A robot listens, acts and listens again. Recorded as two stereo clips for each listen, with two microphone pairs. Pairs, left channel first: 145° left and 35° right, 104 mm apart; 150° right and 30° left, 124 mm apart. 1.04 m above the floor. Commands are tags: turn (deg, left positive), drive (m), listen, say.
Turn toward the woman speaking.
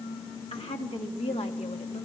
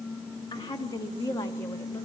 <turn deg="150"/>
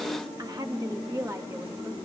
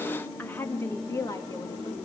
<turn deg="-90"/>
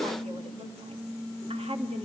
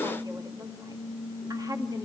<turn deg="-30"/>
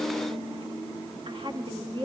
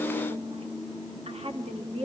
<say>Found it: a woman speaking, straight ahead.</say>